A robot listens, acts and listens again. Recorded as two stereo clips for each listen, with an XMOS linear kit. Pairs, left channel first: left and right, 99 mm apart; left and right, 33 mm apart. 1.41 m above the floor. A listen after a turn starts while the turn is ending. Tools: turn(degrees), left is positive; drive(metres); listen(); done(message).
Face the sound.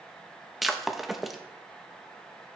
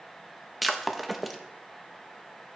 turn(degrees=30)
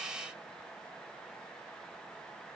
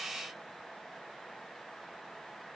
listen()
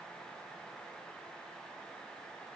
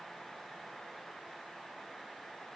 done("I heard breaking glass, but can't make it out now. It was about 30° right or 150° left.")